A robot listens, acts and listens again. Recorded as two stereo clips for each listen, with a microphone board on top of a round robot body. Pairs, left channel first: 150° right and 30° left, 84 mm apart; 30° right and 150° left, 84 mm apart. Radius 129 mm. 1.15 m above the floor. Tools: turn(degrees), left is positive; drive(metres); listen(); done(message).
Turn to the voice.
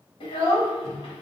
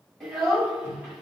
turn(degrees=-120)
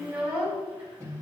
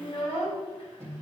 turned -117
done("Found it: a child speaking, straight ahead.")